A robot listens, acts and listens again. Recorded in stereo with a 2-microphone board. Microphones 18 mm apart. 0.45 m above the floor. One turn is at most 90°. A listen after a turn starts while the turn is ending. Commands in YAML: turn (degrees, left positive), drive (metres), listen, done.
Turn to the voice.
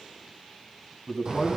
turn: 20
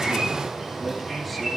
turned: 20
listen: true
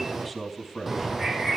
done: "Facing the man speaking."